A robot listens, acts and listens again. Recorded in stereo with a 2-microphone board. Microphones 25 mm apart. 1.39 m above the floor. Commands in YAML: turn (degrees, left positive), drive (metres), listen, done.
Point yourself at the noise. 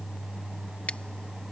turn: 65
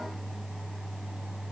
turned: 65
listen: true
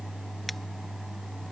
listen: true
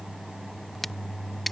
done: "Facing the scissors."